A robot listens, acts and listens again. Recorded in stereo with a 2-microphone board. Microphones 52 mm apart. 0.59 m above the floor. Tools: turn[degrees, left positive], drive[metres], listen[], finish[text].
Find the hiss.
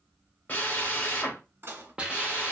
Thought: The hiss: about 20° right or 160° right.
Action: turn[-20]
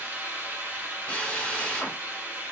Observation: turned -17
Thought: So it is at 145° right.
Action: turn[-145]
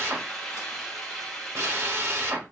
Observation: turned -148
Thought: The hiss is now 10° left.
Action: turn[10]
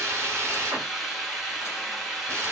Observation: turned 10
Action: finish[Facing the hiss, under 1 m away.]